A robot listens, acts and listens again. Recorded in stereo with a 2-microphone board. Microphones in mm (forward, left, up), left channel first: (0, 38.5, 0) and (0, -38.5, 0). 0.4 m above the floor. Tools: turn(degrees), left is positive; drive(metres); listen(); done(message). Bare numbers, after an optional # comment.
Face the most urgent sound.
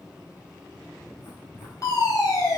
# The fire alarm: about 45° left or 135° left.
turn(45)
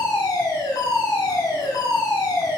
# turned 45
# So it is at 80° left.
turn(80)
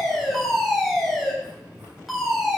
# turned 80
done("Found it: a fire alarm, straight ahead, over 4 m away.")